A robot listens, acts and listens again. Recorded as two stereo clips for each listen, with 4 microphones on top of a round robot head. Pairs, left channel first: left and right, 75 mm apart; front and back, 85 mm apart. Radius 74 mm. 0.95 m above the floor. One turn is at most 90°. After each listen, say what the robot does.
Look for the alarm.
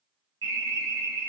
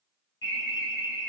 Turn 50° right.
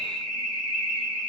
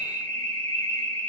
Turn 10° right.
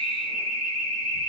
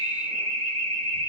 Found it: an alarm, straight ahead.